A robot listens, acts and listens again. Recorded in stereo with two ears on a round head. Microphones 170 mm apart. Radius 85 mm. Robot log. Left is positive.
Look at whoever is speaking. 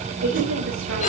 cmd yaw -90
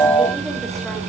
cmd idle
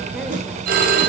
cmd idle
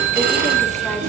end: I heard a woman speaking from this way, but can't make it out now.